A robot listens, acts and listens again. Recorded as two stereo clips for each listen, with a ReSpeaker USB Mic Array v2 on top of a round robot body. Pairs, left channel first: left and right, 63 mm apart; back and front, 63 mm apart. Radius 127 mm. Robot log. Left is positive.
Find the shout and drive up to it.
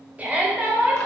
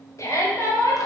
note: The shout: 150° right.
cmd yaw -150
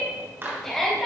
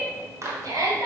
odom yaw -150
cmd fwd 1.0
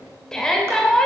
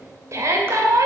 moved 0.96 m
note: The shout is now 15° left.
cmd yaw +15
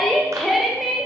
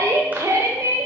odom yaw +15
cmd fwd 1.0
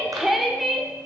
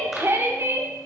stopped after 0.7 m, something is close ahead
end: I am next to the shout.